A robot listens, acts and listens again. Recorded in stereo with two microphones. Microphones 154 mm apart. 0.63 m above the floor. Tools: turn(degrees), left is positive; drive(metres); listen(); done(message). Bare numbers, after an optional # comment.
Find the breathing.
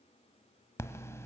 # The breathing: about 20° left or 160° left.
turn(20)
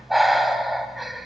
done("Facing the breathing, 1 to 2 m away.")